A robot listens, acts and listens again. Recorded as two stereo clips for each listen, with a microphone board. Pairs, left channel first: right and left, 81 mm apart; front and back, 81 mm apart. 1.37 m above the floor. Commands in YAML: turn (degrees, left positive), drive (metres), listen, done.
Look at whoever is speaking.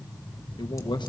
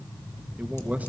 turn: -110
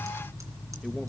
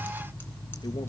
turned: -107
listen: true
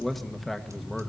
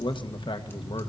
done: "Found it: a man speaking, straight ahead."